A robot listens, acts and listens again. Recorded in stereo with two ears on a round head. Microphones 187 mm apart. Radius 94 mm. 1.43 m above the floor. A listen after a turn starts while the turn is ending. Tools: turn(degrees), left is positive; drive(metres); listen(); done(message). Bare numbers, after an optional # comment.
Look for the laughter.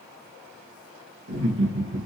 # The laughter: about 65° right or 115° right.
turn(-65)
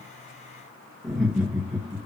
done("Found it: laughter, straight ahead.")